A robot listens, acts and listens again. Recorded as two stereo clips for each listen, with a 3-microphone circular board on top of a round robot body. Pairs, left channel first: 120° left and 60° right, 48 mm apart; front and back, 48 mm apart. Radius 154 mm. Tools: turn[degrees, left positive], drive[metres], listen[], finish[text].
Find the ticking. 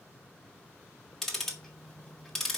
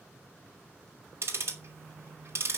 Thought: The ticking: 155° right.
Action: turn[-155]
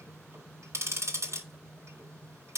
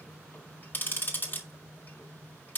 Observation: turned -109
Thought: The ticking is now 45° right.
Action: turn[-45]
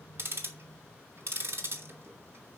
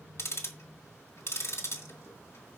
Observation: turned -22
Thought: The ticking is now 25° right.
Action: turn[-25]
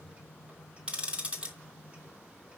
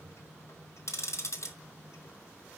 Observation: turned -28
Action: finish[Facing the ticking.]